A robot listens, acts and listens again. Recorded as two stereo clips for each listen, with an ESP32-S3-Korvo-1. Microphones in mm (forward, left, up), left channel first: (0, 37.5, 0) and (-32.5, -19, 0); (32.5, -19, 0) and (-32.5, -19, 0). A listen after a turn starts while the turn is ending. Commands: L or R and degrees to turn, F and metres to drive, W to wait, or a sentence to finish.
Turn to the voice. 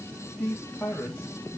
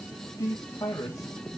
Facing the man speaking.